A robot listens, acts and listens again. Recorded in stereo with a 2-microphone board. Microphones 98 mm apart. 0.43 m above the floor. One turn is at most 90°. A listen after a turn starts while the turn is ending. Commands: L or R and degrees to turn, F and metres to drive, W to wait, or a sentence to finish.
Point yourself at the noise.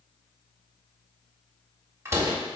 R25
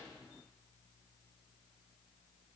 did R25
W
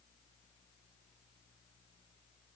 I heard a door slam, but can't make it out now. It was about straight ahead or 130° right.